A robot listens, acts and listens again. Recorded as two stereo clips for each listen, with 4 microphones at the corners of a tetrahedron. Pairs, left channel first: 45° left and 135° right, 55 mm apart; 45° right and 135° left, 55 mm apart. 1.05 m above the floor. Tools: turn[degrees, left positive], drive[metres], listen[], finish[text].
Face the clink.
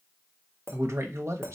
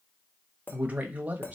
Thought: The clink: 100° right.
Action: turn[-100]
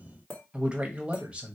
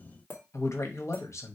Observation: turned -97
Action: finish[Facing the clink, 1 to 2 m away.]